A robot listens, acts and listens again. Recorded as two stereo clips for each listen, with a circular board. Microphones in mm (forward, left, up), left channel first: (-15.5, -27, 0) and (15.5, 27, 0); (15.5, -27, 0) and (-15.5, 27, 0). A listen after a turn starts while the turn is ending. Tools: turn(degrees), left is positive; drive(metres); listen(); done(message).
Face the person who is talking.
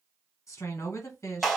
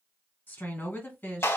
turn(degrees=-105)
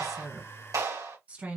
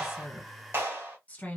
done("Found it: a woman speaking, straight ahead, 2 to 4 m away.")